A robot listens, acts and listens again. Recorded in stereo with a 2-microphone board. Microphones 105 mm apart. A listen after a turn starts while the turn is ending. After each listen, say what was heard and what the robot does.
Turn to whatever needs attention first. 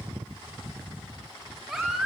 Turn 30° left.
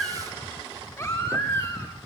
So it is at 150° left. Turn 150° left.
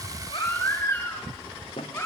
The baby crying is now 20° left. Turn 20° left.
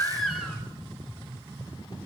Facing the baby crying, over 4 m away.